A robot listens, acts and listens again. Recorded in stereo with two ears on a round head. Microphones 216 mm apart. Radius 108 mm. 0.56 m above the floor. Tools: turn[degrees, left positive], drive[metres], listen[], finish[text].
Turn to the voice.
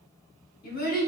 Thought: The child speaking: about 40° left or 140° left.
Action: turn[40]
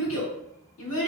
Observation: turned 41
Thought: So it is at 95° left.
Action: turn[95]
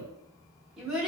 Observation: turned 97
Action: finish[Found it: a child speaking, straight ahead, 1 to 2 m away.]